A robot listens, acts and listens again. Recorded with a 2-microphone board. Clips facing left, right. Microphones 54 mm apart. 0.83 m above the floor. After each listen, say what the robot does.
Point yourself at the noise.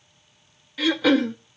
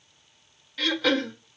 Turn 30° left.
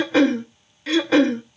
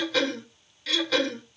Turn 145° left.
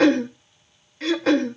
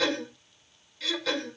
Turn 50° left.
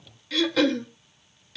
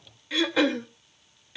Turn 20° right.
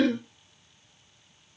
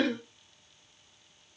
Found it: throat clearing, straight ahead, under 1 m away.